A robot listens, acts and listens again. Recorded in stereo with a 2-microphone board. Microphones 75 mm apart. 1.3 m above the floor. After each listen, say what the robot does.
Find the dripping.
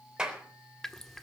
Turn 30° left.
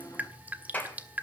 Turn 25° right.
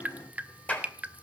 Turn 25° right.
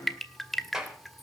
Found it: dripping, straight ahead, 1 to 2 m away.